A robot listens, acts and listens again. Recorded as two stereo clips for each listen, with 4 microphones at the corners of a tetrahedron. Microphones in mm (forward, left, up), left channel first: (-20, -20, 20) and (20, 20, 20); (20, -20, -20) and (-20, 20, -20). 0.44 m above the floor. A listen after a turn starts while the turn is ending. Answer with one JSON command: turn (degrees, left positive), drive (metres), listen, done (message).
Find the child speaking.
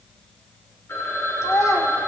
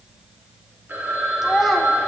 {"turn": -140}
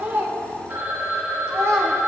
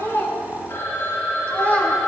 {"turn": 15}
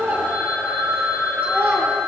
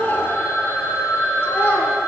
{"done": "Facing the child speaking."}